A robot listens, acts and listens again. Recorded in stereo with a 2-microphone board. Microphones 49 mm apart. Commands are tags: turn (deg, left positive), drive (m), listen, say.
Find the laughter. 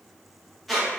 <listen/>
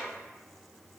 <listen/>
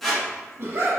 <turn deg="-55"/>
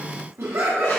<turn deg="-70"/>
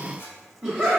<say>Facing the laughter.</say>